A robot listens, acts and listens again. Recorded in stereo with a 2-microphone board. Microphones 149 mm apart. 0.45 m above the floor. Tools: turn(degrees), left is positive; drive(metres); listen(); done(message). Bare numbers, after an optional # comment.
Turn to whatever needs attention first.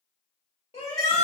# The shout: about 40° left or 140° left.
turn(40)
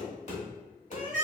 # So it is at 90° left.
turn(90)
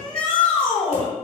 # The shout is now 10° left.
turn(10)
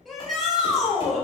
done("Facing the shout, 1 to 2 m away.")